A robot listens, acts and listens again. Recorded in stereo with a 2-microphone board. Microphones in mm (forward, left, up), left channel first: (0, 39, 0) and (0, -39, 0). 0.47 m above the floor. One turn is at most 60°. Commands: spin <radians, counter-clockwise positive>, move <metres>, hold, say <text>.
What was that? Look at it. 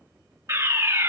spin -0.70
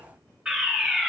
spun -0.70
spin -0.26
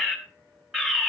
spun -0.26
say Found it: a fire alarm, straight ahead, 2 to 4 m away.